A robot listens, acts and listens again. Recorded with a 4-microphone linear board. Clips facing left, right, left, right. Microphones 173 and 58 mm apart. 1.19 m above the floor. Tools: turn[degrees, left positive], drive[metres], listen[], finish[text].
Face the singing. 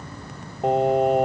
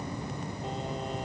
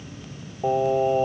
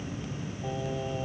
Thought: The singing: about 75° left or 105° left.
Action: turn[75]
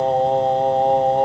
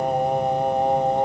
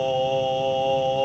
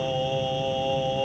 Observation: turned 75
Thought: So it is at 20° left.
Action: turn[20]
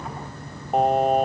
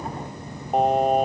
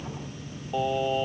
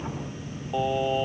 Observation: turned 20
Action: finish[Found it: singing, straight ahead.]